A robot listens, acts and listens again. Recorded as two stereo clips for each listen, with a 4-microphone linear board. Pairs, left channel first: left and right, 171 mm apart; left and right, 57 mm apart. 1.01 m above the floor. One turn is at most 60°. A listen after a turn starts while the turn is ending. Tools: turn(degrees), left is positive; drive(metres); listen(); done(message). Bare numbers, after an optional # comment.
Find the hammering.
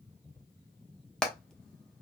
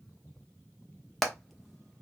turn(30)
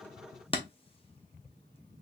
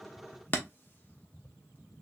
# So it is at 145° left.
turn(60)
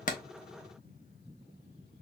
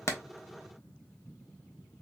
# Nothing new. It was at 85° left.
turn(60)
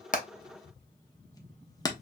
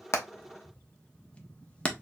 # The hammering is now 25° left.
turn(25)
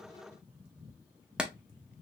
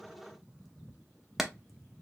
done("Found it: hammering, straight ahead.")